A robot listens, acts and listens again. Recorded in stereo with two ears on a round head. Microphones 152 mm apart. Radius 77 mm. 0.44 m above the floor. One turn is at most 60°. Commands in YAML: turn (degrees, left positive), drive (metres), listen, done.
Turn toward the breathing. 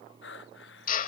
turn: 60
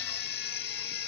listen: true
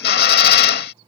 listen: true
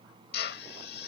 done: "I heard breathing, but can't make it out now. It was about 10° left or 50° left."